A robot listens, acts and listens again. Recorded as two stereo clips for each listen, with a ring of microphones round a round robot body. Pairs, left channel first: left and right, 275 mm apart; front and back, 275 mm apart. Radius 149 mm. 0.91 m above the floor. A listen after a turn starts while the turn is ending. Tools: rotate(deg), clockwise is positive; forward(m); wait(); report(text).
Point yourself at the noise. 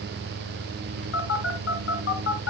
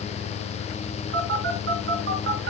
rotate(-130)
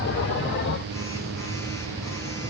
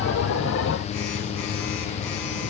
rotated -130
wait()
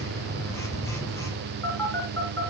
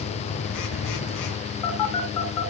rotate(-10)
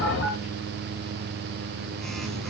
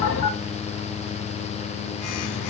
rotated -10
report("Found it: a phone buzzing, straight ahead, 2 to 4 m away.")